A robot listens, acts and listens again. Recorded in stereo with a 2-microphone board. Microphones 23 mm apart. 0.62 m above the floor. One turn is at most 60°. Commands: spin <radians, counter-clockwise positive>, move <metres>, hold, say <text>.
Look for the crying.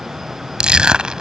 hold
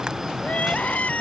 spin 1.05
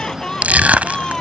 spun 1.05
spin 0.61
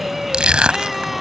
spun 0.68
say Found it: crying, straight ahead.